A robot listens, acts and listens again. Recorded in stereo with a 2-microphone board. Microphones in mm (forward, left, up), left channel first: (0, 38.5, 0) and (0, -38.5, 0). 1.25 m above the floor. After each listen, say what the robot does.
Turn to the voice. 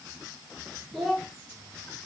Turn 30° right.
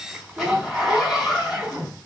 Turn 145° right.
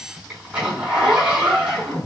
Keep listening.
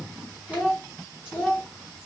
Turn 15° left.
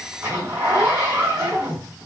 Facing the child speaking.